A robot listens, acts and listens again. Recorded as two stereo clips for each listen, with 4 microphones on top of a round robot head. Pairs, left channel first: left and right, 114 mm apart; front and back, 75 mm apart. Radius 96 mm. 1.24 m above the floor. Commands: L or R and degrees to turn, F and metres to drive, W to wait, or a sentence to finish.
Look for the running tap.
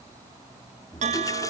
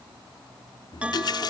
L20
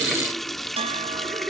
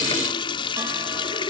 Found it: a running tap, straight ahead.